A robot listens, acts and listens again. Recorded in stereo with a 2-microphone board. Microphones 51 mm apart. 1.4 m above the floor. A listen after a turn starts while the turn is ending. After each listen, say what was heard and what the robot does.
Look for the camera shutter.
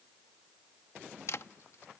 The camera shutter: about 65° left or 115° left. Turn 65° left.
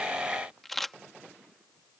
Found it: a camera shutter, straight ahead.